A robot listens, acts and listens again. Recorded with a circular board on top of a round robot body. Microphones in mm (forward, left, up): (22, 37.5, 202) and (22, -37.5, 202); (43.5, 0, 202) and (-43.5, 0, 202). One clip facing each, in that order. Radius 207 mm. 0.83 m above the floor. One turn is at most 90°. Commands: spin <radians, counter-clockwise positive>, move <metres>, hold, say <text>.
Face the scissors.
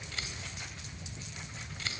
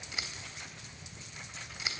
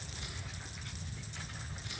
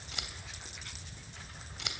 spin -1.57
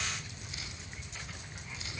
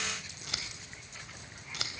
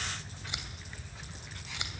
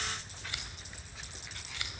spin -1.22
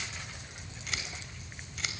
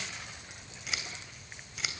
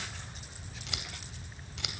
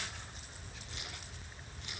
say Found it: scissors, straight ahead, 2 to 4 m away.